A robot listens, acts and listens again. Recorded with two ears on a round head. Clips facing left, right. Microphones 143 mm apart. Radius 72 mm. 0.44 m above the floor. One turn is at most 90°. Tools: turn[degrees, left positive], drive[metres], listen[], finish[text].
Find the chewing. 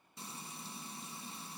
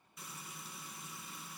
Action: listen[]
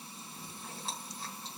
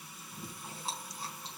Action: turn[-30]
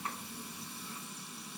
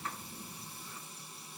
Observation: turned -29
Thought: So it is at 15° left.
Action: turn[15]
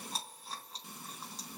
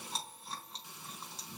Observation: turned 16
Action: finish[Facing the chewing, over 4 m away.]